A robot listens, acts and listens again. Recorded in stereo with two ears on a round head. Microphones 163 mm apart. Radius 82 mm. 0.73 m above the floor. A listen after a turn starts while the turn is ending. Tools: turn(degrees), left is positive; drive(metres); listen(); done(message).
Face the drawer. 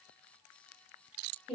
listen()
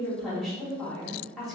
listen()
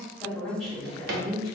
turn(degrees=-55)
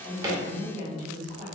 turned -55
listen()
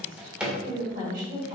done("Found it: a drawer, straight ahead, under 1 m away.")